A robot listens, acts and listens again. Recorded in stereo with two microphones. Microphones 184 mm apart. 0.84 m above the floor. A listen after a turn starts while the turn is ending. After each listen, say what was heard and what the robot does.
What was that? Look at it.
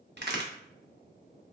The crack: about 65° right or 115° right. Turn 65° right.
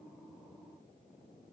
Keep listening.
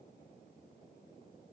I heard a crack, but can't make it out now. It was about straight ahead or 50° right.